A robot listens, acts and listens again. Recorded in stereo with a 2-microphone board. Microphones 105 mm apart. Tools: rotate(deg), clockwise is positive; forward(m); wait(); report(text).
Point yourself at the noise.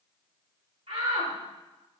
rotate(75)
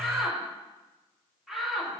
report("Facing the shout.")